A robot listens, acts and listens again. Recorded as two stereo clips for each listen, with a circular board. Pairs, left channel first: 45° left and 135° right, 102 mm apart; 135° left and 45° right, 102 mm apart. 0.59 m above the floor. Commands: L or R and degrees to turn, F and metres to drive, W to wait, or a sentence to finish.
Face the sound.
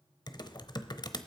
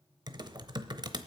Facing the typing on a keyboard, under 1 m away.